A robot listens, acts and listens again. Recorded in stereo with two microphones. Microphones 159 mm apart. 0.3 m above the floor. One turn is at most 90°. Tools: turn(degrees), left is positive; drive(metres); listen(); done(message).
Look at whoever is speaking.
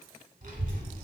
turn(degrees=-55)
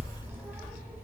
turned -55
turn(degrees=-10)
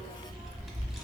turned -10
done("Found it: a child speaking, straight ahead.")